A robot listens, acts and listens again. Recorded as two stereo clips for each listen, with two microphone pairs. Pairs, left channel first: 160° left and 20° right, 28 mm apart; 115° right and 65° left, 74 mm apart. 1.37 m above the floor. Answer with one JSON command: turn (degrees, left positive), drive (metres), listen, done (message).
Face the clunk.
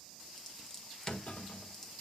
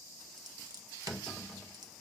{"turn": 150}
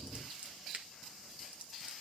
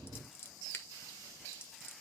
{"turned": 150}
{"done": "I heard a clunk from this way, but can't make it out now."}